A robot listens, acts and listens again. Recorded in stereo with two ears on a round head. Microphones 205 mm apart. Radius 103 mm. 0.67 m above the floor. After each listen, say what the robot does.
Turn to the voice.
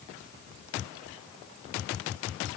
Keep listening.
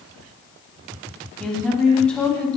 Turn 30° left.
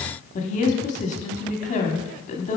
Turn 145° left.
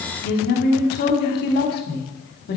Turn 50° left.
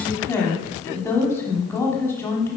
Turn 10° left.
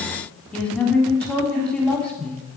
Facing the woman speaking, 1 to 2 m away.